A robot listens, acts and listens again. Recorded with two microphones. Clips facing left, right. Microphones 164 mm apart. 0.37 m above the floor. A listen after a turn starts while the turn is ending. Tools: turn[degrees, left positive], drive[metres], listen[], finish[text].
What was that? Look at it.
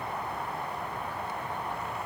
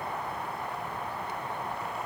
Action: listen[]
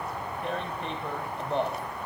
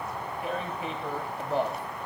Action: turn[-30]
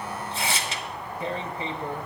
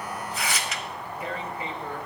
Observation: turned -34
Thought: So it is at 30° left.
Action: turn[30]
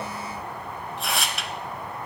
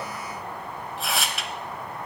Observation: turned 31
Action: finish[Facing the tearing paper, under 1 m away.]